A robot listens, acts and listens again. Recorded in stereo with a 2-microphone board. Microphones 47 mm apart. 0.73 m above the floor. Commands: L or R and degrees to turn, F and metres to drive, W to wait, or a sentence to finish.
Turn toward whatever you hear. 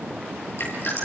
L55
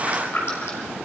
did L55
L70
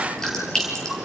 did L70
L10
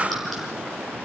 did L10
Facing the dripping, over 4 m away.